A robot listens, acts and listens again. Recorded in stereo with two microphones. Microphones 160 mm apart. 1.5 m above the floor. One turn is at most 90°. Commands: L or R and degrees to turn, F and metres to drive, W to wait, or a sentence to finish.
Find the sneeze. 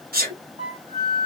R70
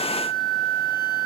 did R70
W
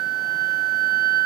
I heard a sneeze, but can't make it out now. It was about straight ahead or 40° right.